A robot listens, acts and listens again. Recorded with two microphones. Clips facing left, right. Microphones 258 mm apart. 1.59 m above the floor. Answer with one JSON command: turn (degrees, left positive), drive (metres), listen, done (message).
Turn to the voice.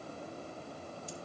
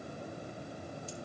{"listen": true}
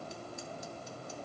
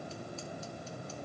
{"listen": true}
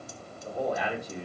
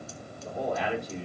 {"turn": 30}
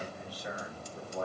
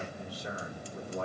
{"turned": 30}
{"turn": -25}
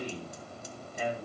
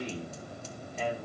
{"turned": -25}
{"turn": 10}
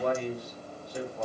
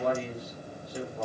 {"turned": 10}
{"done": "Found it: a man speaking, straight ahead, over 4 m away."}